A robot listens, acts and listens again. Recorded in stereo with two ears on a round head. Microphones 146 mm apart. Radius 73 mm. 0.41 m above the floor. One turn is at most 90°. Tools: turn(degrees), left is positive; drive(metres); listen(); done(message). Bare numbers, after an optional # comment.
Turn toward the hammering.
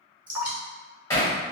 # The hammering: about 15° left or 165° left.
turn(15)
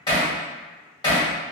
# So it is at 150° left.
turn(90)
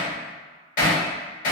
# The hammering is now 65° left.
turn(65)
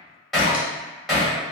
done("Found it: hammering, straight ahead.")